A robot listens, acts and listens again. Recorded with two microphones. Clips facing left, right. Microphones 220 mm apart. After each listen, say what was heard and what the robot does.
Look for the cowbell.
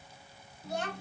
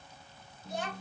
Keep listening.
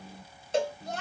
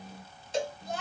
The cowbell: about 55° left or 125° left. Turn 55° left.
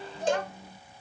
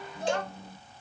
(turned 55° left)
So it is at 55° left. Turn 55° left.
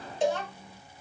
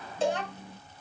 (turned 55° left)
The cowbell is now 20° left. Turn 20° left.
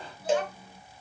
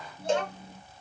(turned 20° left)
Found it: a cowbell, straight ahead, 1 to 2 m away.